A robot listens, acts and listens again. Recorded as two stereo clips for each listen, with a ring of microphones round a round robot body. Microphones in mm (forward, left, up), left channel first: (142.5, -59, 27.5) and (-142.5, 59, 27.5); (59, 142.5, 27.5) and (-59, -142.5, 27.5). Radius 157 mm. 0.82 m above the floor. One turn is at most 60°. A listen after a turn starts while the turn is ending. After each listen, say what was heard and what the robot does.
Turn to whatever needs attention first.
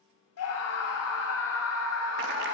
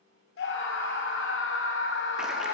The scream: 15° left. Turn 15° left.
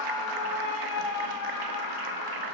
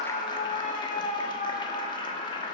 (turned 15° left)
Facing the scream, 2 to 4 m away.